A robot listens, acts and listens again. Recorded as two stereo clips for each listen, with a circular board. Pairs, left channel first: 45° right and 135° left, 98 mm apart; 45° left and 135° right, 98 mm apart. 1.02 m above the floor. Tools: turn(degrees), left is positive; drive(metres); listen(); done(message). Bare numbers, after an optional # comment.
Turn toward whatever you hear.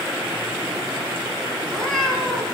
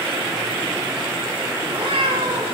# The cat meowing: 130° right.
turn(-130)
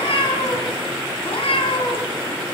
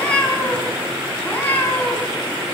# The cat meowing is now 25° right.
turn(-25)
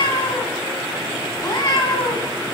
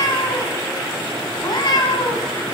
done("Found it: a cat meowing, straight ahead.")